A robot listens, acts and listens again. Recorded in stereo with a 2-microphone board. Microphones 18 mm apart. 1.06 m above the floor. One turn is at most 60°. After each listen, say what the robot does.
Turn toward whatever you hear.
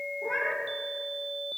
Turn 35° left.
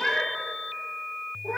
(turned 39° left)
Facing the cat meowing, over 4 m away.